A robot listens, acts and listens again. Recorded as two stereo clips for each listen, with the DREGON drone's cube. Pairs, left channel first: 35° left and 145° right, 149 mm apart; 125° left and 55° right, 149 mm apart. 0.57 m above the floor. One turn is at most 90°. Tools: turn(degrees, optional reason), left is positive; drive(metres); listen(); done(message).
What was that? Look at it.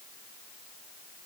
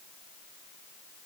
listen()
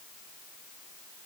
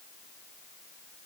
listen()
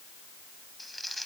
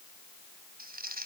turn(degrees=-55, reason="The crumpling: 55° right.")
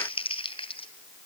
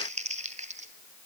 turn(degrees=-20, reason="The crumpling is now 20° right.")
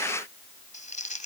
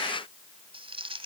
done("Found it: crumpling, straight ahead, 2 to 4 m away.")